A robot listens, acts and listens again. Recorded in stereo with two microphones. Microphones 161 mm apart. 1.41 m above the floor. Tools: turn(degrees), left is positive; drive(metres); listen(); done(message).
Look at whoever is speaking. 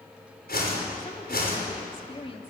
turn(degrees=35)
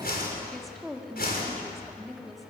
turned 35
done("Facing the woman speaking.")